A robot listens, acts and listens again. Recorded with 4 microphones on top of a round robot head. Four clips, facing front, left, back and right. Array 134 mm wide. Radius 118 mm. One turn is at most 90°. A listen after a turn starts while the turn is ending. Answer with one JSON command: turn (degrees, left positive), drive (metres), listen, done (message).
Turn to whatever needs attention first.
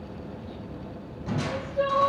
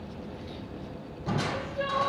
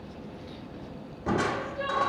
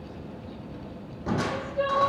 {"turn": -35}
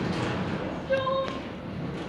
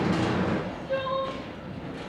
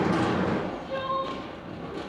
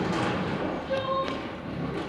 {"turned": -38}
{"done": "Facing the crying, 2 to 4 m away."}